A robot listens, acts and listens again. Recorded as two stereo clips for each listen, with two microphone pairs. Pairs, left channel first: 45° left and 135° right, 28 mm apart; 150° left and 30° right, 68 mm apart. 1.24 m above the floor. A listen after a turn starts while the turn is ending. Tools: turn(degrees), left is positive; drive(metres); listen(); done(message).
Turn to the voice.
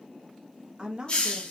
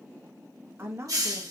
turn(degrees=-75)
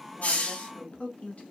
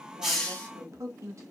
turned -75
turn(degrees=15)
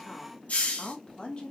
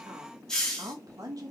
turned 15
done("Found it: a woman speaking, straight ahead, 1 to 2 m away.")